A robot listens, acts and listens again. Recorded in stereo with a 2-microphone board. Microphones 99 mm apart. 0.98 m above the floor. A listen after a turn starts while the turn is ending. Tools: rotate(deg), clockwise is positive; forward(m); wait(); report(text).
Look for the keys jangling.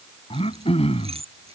rotate(90)
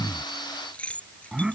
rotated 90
rotate(-15)
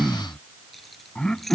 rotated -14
report("Facing the keys jangling.")